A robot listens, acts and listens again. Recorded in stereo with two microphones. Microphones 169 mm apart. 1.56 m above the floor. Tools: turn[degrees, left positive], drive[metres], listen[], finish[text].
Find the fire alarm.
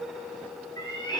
Action: listen[]
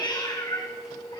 Action: listen[]
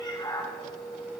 Action: finish[I can't make out a fire alarm, only a cat meowing.]